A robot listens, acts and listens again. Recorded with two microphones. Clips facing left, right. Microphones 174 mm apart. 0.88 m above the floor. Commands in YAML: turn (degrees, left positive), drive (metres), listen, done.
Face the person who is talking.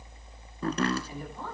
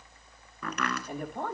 turn: -60
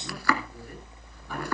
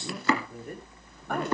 listen: true
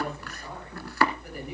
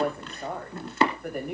turn: -60
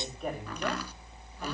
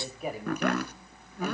done: "Found it: a woman speaking, straight ahead, over 4 m away."